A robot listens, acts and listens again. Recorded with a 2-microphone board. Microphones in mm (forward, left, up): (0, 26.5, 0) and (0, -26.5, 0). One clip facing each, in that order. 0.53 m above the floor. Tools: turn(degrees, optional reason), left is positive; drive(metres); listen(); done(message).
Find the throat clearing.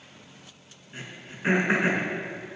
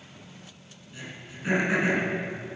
turn(degrees=35, reason="The throat clearing: about 35° left or 145° left.")
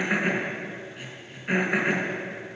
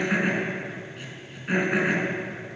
done("Found it: throat clearing, straight ahead.")